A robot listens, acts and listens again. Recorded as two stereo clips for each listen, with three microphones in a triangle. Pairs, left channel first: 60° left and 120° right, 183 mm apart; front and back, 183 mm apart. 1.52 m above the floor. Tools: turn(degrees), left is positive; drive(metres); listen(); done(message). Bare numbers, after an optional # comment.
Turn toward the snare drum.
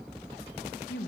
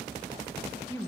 listen()
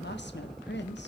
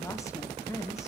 listen()
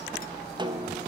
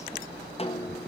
# The snare drum: 55° right.
turn(-55)
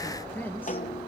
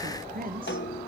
# The snare drum is now 10° left.
turn(10)
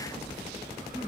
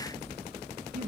listen()
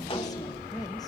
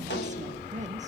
listen()
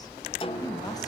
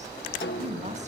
done("Found it: a snare drum, straight ahead, 1 to 2 m away.")